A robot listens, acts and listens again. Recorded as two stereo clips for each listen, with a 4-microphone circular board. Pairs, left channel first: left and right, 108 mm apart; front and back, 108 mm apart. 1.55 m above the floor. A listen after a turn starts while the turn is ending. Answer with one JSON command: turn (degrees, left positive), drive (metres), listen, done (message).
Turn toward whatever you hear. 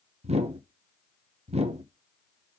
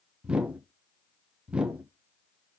{"turn": -100}
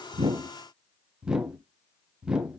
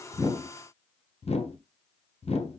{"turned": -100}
{"turn": -10}
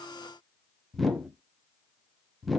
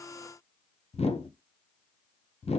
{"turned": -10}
{"done": "Facing the whoosh."}